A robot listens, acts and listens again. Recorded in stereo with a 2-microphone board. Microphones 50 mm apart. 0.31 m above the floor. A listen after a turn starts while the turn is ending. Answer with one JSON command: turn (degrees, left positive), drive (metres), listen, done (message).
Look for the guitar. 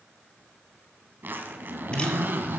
{"listen": true}
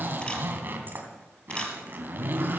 {"listen": true}
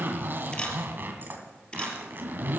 {"done": "I can't make out a guitar to turn to."}